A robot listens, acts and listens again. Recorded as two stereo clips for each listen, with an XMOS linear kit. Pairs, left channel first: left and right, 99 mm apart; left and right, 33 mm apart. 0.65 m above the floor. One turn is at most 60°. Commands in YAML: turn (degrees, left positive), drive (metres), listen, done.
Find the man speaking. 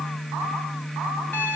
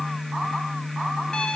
listen: true
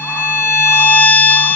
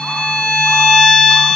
listen: true
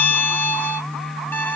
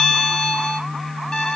done: "I can't make out a man speaking to turn to."